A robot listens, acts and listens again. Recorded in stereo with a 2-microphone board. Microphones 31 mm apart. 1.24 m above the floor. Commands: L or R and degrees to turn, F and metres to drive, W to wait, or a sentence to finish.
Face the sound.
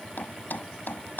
L75
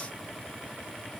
W
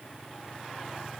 I heard a thud, but can't make it out now. It was about straight ahead or 30° left.